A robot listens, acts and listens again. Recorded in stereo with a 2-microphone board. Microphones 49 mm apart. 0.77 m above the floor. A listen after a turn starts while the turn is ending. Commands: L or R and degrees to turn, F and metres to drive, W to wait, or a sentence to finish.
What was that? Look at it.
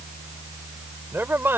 R50
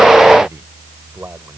R65
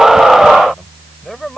Found it: a man speaking, straight ahead.